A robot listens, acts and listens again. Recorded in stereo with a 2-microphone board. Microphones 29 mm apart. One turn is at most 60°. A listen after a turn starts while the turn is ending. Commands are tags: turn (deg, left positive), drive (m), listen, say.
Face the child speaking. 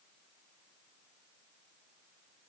<listen/>
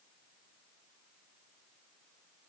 <listen/>
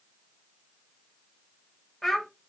<turn deg="30"/>
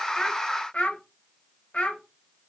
<turn deg="60"/>
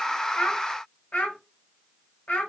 <turn deg="60"/>
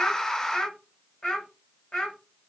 <turn deg="35"/>
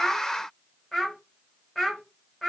<turn deg="20"/>
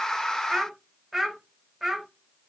<say>Facing the child speaking.</say>